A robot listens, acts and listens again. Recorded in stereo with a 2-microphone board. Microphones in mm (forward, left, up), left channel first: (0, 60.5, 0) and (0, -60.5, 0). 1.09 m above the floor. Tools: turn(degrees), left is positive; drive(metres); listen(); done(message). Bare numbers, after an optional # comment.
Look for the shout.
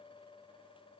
listen()
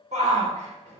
# The shout: about 70° right or 110° right.
turn(-70)
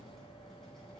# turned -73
listen()
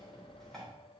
listen()
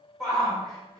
done("Found it: a shout, straight ahead, 2 to 4 m away.")